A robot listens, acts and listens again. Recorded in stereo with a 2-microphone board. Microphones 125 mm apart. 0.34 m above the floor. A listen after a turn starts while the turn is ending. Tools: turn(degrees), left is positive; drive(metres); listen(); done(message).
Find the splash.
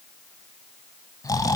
listen()
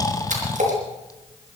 turn(degrees=-75)
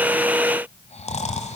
listen()
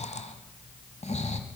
done("I heard a splash, but can't make it out now. It was about straight ahead or 30° right.")